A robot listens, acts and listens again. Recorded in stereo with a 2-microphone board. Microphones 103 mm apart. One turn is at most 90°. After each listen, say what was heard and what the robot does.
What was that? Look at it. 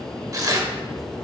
The tearing paper: about 35° right or 145° right. Turn 35° right.
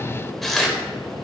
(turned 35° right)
Found it: tearing paper, straight ahead.